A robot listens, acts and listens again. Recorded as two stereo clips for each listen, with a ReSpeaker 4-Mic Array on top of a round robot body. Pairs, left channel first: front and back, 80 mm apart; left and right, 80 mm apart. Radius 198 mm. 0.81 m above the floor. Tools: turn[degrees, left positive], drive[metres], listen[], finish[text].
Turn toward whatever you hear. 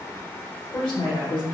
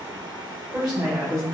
Action: finish[Facing the woman speaking.]